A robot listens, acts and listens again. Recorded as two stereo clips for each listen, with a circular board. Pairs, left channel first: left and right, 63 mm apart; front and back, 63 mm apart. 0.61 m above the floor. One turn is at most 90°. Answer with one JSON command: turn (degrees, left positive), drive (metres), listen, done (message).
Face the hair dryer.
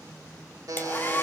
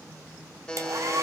{"turn": 90}
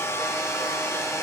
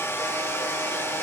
{"turn": 45}
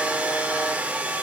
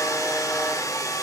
{"turn": -20}
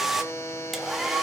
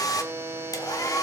{"done": "Facing the hair dryer."}